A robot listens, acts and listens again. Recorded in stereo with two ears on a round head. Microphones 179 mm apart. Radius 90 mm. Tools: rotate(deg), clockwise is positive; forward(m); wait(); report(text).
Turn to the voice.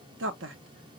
rotate(60)
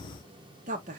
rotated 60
rotate(40)
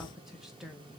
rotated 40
report("Facing the woman speaking, under 1 m away.")